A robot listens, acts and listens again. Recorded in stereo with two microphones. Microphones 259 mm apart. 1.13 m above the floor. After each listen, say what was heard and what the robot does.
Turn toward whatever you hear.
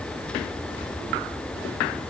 Keep listening.
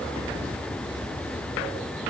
Keep listening.
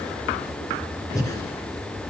Turn 30° left.
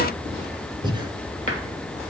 So it is at 20° right. Turn 20° right.
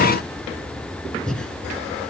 Facing the breathing.